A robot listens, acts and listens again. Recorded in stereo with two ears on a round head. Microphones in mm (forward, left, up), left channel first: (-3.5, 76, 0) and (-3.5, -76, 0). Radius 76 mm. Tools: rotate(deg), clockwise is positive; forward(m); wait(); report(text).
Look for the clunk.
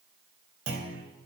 rotate(90)
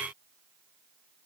report("Facing where the clunk came from. I can't hear it now.")